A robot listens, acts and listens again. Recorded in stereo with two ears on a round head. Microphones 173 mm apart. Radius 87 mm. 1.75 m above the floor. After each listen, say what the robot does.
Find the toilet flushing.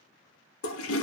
Turn 75° left.
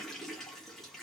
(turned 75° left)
Found it: a toilet flushing, straight ahead, under 1 m away.